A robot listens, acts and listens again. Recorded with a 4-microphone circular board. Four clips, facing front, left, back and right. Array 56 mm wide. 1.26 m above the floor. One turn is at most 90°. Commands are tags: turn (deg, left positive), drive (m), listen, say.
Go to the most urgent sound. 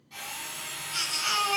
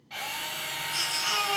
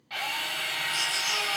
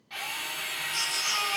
<drive m="1.0"/>
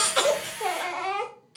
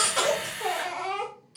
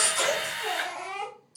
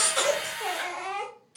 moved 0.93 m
<drive m="1.0"/>
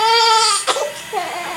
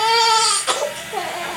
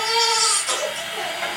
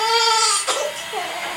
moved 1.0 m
<drive m="1.0"/>
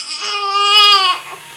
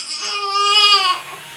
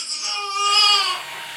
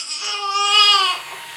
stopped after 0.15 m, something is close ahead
<say>Arrived at the baby crying, straight ahead.</say>